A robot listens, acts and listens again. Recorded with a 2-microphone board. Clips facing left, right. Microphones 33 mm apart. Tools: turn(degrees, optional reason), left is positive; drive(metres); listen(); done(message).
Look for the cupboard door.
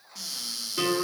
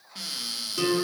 turn(degrees=-40, reason="The cupboard door: about 40° right or 140° right.")
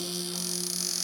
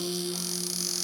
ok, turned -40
done("Found it: a cupboard door, straight ahead.")